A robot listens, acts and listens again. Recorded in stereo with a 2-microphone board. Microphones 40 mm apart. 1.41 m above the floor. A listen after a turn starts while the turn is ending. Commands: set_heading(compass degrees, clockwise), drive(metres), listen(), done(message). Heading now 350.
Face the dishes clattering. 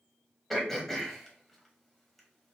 listen()
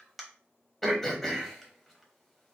listen()
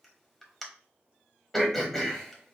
done("I can't make out dishes clattering to turn to.")